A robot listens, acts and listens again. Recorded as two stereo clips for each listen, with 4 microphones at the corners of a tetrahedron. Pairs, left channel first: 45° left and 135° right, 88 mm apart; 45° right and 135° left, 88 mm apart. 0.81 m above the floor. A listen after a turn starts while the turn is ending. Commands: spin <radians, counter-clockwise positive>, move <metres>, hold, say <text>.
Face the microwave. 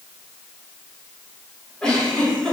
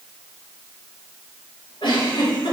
hold
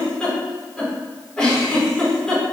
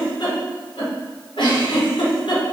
hold
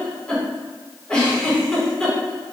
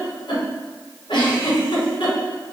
say I can't make out a microwave, only a giggle.